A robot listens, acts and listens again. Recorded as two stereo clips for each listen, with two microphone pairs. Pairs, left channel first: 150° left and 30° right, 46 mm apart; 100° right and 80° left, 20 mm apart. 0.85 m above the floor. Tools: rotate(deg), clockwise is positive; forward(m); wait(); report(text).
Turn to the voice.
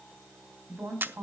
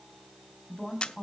rotate(20)
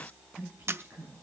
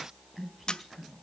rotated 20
report("Facing the woman speaking.")